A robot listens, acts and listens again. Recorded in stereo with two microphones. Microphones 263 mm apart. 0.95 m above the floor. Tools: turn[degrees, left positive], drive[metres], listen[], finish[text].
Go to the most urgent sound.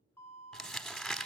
Action: turn[30]
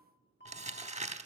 Thought: So it is at 140° left.
Action: turn[140]
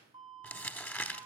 Thought: The alarm is now 20° right.
Action: turn[-20]
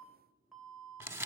Action: drive[1.0]
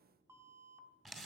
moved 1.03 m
Thought: The alarm is now 10° right.
Action: turn[-10]
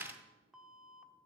Action: drive[1.0]
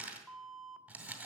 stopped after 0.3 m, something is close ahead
Action: finish[I am next to the alarm.]